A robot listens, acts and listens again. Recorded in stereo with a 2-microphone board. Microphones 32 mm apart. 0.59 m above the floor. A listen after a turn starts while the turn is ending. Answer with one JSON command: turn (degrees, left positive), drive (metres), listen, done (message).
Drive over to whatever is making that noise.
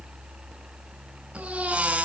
{"turn": -35}
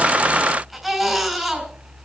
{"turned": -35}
{"drive": 1.0}
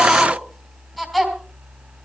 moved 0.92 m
{"drive": 1.0}
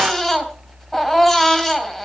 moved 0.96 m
{"turn": 10}
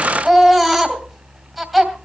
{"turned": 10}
{"drive": 1.0}
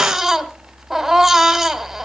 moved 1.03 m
{"turn": -10}
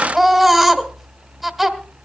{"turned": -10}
{"drive": 1.0}
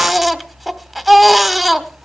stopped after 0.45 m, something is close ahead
{"done": "Arrived at the baby crying, straight ahead."}